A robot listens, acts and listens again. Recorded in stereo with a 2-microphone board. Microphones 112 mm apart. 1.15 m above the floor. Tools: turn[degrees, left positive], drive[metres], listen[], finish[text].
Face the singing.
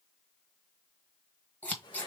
Action: listen[]
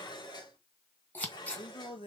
Thought: The singing: about 50° left or 130° left.
Action: turn[50]
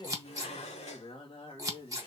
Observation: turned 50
Thought: So it is at 50° left.
Action: turn[50]
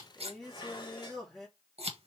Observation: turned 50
Action: finish[Found it: singing, straight ahead, 2 to 4 m away.]